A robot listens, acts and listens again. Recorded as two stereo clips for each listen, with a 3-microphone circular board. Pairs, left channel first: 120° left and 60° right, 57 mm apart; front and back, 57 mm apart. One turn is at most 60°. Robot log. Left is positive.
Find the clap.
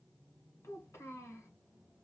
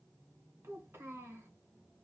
cmd idle
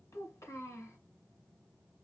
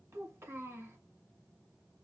cmd idle
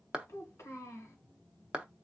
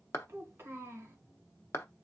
note: The clap: 10° left.
cmd yaw +10
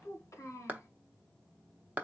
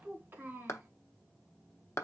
end: Facing the clap, under 1 m away.